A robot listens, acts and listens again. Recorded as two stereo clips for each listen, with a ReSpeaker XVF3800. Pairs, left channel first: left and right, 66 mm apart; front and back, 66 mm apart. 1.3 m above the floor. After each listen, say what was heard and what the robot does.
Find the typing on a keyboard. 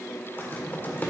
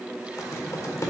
The typing on a keyboard: 35° left. Turn 35° left.
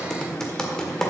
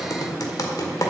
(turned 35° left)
The typing on a keyboard is now 10° left. Turn 10° left.
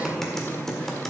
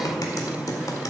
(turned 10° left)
The typing on a keyboard is now 10° left. Turn 10° left.
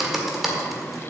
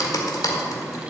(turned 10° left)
Found it: typing on a keyboard, straight ahead, 1 to 2 m away.